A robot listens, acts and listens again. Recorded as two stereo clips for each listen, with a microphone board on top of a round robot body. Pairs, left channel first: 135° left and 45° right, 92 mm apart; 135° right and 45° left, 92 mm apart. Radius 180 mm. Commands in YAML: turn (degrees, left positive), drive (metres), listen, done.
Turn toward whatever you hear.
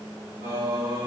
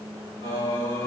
turn: -100
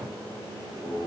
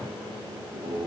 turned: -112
turn: 50
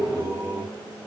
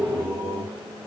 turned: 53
turn: 25
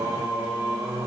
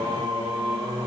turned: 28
turn: 15
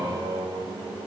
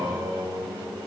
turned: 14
done: "Found it: singing, straight ahead, 1 to 2 m away."